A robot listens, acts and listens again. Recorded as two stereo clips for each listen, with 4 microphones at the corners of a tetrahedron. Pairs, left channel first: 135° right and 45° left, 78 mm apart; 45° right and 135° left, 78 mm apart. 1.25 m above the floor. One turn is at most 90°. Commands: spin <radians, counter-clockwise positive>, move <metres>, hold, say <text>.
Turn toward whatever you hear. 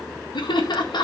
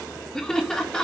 spin -1.57
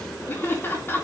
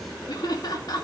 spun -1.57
spin -1.31
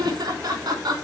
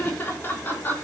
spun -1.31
spin 0.26
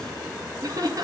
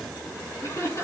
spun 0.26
say Found it: laughter, straight ahead, over 4 m away.